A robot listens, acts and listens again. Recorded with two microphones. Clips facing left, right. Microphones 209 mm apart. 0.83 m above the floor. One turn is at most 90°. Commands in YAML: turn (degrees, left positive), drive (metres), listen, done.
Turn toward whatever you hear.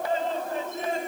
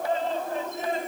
listen: true
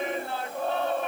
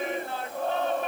listen: true
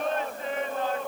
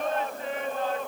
done: "I can't make out anything to turn to."